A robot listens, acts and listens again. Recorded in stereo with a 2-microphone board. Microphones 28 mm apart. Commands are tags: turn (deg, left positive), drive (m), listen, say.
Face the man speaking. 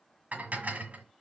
<listen/>
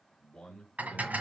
<turn deg="20"/>
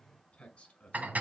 <turn deg="140"/>
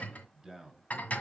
<turn deg="-15"/>
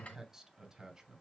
<turn deg="-15"/>
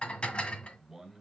<say>Found it: a man speaking, straight ahead, 2 to 4 m away.</say>